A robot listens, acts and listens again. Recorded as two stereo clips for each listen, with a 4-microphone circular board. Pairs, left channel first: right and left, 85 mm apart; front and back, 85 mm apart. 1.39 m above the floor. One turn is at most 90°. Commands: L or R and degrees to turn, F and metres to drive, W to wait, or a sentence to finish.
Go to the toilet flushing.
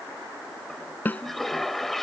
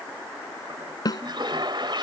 R90
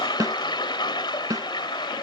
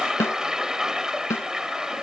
R90
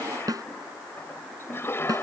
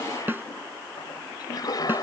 R30
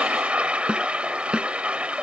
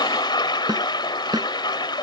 L15
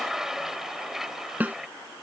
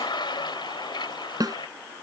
F1.0
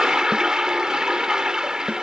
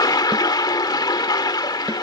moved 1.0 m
L10
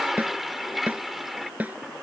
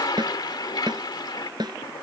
F1.0
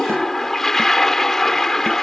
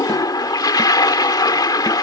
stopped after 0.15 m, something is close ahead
Arrived at the toilet flushing, straight ahead.